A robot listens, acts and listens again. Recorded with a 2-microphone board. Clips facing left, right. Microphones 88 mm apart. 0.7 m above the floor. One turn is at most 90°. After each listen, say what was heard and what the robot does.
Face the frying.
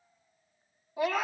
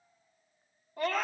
Keep listening.
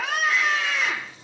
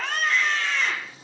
The frying: about 45° right or 135° right. Turn 45° right.
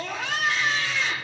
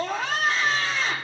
Keep listening.
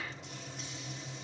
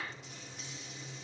Found it: frying, straight ahead.